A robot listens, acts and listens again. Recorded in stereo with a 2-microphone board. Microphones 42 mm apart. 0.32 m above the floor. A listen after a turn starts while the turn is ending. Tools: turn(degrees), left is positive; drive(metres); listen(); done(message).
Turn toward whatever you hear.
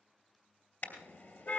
turn(degrees=55)
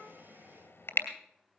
turn(degrees=70)
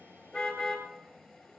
done("Found it: a car horn, straight ahead.")